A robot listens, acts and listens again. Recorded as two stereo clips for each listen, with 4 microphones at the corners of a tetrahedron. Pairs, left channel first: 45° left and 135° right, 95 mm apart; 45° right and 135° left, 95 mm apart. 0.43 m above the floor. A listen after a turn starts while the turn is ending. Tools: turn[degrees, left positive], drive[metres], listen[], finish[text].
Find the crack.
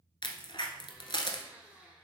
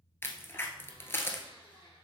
Thought: The crack: 20° left.
Action: turn[20]
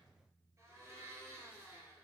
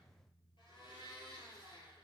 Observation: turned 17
Action: finish[Facing where the crack came from. I can't hear it now.]